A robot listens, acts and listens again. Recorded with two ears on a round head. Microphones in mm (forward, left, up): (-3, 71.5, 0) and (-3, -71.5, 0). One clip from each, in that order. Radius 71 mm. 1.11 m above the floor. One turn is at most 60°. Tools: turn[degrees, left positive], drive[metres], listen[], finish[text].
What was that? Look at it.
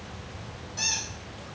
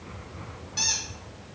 Thought: The squeak: about 55° right or 125° right.
Action: turn[-55]
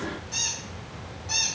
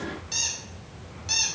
Thought: So it is at 65° right.
Action: turn[-60]
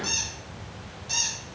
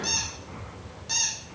Action: finish[Found it: a squeak, straight ahead, 2 to 4 m away.]